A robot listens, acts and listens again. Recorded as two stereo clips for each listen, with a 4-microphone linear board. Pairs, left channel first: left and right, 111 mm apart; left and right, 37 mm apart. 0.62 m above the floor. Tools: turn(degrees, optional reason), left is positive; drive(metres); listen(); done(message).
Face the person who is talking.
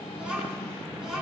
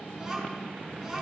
turn(degrees=-30)
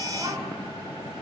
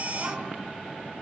listen()
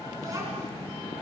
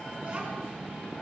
listen()
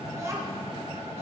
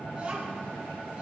done("I heard a child speaking, but can't make it out now. It was about 25° left or 145° right.")